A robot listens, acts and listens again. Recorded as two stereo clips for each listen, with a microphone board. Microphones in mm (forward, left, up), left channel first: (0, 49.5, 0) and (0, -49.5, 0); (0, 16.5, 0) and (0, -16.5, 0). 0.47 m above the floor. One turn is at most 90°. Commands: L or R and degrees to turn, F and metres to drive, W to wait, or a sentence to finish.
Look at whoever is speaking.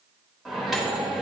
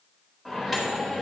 W
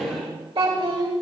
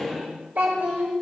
R70
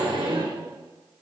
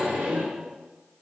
W
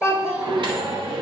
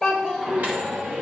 R15
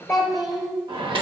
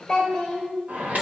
Found it: a child speaking, straight ahead.